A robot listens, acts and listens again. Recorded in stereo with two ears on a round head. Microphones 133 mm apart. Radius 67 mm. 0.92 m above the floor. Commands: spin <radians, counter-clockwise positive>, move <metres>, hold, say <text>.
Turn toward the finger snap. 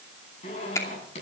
spin 0.35
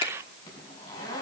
spin 2.44
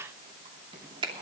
spin -0.61
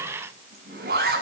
hold
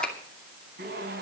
hold
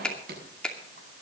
say Facing the finger snap.